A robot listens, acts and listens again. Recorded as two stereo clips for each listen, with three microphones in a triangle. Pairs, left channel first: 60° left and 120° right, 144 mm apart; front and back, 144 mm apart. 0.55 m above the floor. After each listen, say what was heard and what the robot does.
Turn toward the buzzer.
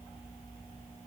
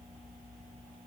Keep listening.
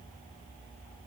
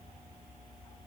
Keep listening.
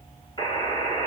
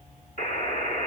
Facing the buzzer.